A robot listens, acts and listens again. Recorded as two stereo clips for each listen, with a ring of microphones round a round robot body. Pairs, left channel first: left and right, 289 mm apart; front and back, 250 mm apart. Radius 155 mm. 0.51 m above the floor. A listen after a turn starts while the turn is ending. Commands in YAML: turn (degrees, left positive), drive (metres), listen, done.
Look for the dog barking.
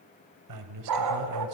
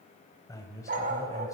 turn: -115
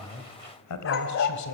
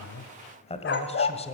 turn: 45
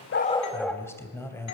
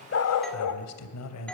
done: "Found it: a dog barking, straight ahead."